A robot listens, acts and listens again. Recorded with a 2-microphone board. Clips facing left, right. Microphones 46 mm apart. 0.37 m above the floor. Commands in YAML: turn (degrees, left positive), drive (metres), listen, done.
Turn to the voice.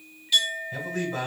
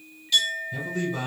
turn: 50
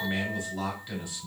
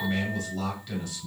turn: 15
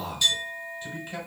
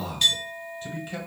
done: "Facing the man speaking, 1 to 2 m away."